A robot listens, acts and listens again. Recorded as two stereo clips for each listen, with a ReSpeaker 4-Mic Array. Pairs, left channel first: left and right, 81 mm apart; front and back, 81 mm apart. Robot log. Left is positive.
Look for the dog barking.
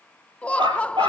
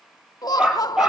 note: The dog barking: 100° right.
cmd yaw -100
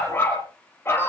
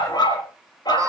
note: The dog barking is now 30° left.
cmd yaw +30
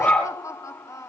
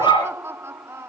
note: The dog barking is now 15° left.
cmd yaw +15
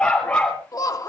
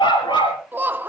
note: The dog barking is now 15° left.
cmd yaw +15
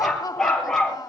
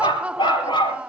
end: Found it: a dog barking, straight ahead, over 4 m away.